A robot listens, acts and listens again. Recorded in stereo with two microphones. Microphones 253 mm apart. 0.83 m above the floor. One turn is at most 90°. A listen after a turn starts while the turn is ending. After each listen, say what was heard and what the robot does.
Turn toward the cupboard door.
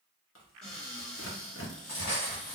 Turn 30° left.
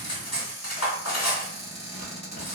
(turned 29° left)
So it is at 30° right. Turn 30° right.
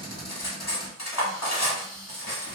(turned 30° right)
Found it: a cupboard door, straight ahead.